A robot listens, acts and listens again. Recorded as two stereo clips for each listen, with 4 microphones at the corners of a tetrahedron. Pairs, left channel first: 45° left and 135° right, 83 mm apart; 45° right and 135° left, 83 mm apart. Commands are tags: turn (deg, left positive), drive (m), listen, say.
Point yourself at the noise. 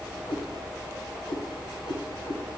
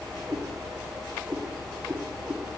<turn deg="30"/>
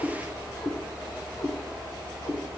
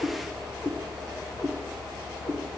<turn deg="-15"/>
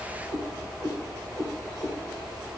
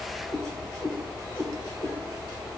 <turn deg="-20"/>
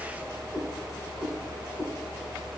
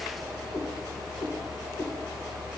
<say>Facing the cat meowing, 2 to 4 m away.</say>